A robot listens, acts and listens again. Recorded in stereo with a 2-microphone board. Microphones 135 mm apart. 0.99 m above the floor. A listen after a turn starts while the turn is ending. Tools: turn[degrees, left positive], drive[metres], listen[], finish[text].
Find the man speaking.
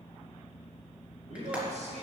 Thought: The man speaking: about 60° right or 120° right.
Action: turn[-60]
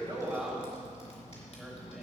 Action: finish[Facing the man speaking.]